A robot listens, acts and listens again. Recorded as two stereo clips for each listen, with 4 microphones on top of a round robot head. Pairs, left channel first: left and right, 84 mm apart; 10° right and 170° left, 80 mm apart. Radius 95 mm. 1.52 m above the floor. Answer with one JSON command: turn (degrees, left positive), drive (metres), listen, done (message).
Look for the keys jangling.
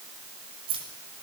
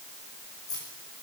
{"turn": -60}
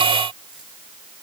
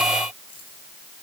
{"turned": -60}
{"listen": true}
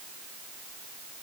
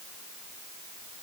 {"listen": true}
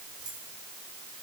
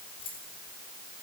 {"done": "Facing the keys jangling."}